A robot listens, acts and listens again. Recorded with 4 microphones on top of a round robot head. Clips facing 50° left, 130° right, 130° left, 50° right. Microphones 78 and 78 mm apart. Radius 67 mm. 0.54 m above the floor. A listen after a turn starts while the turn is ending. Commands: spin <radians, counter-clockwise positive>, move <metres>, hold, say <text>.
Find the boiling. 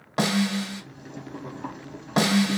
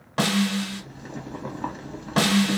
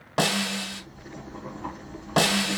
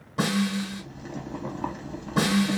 spin -1.40
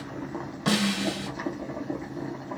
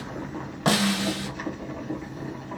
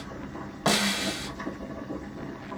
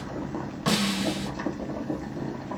spin -0.35
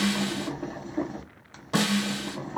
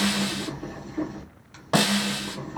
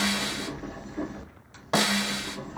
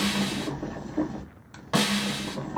say Found it: boiling, straight ahead, under 1 m away.